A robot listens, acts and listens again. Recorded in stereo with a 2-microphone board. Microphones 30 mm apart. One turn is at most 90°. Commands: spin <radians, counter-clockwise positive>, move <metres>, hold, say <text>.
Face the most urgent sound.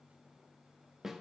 hold
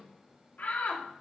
spin 1.13
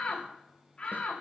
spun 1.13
spin 0.61
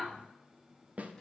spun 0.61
say Facing the shout.